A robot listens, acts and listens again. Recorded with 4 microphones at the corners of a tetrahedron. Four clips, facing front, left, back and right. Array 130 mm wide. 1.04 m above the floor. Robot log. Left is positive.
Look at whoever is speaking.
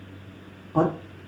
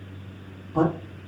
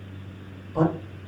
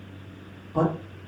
end: Found it: a man speaking, straight ahead, 2 to 4 m away.